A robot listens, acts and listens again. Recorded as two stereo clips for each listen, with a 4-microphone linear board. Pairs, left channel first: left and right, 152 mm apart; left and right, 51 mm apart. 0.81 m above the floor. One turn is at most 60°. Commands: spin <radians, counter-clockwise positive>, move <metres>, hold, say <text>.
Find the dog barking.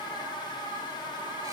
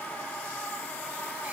hold
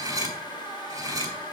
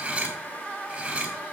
hold
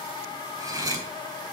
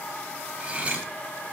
say I can't make out a dog barking, only cutlery clinking.